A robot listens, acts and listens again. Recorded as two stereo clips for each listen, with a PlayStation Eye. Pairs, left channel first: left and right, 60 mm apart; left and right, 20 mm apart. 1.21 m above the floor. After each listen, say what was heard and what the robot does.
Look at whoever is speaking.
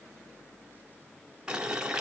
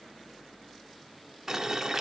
Keep listening.
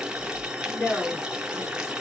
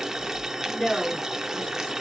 The woman speaking: about 60° left or 120° left. Turn 60° left.
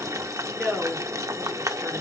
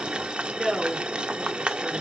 Facing the woman speaking.